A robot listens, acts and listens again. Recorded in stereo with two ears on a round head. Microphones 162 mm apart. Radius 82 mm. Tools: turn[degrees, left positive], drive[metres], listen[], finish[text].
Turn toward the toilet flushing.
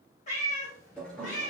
Action: turn[30]
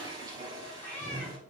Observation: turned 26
Thought: So it is at 20° right.
Action: turn[-20]
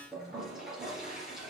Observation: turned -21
Action: finish[Found it: a toilet flushing, straight ahead, 2 to 4 m away.]